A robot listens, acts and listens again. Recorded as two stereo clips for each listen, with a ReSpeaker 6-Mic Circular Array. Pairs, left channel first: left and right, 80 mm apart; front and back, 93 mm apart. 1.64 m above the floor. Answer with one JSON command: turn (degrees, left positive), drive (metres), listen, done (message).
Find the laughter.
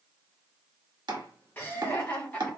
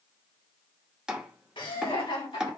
{"turn": 20}
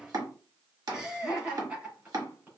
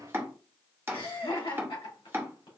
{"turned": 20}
{"turn": -15}
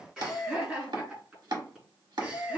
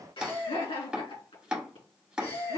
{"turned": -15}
{"turn": -10}
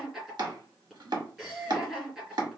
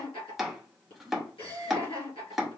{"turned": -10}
{"done": "Found it: laughter, straight ahead."}